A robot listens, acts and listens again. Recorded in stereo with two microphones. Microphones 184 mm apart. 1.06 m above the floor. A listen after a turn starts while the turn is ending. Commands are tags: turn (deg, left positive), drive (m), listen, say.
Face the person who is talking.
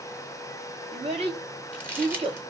<turn deg="-35"/>
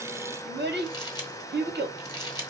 <turn deg="-115"/>
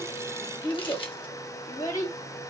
<turn deg="15"/>
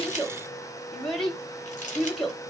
<say>Found it: a child speaking, straight ahead, 1 to 2 m away.</say>